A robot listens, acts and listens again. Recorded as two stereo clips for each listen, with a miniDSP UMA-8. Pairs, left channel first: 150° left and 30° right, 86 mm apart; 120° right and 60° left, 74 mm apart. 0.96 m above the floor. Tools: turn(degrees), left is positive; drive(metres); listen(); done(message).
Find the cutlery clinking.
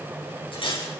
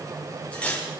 turn(degrees=165)
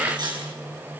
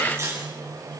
done("Found it: cutlery clinking, straight ahead, over 4 m away.")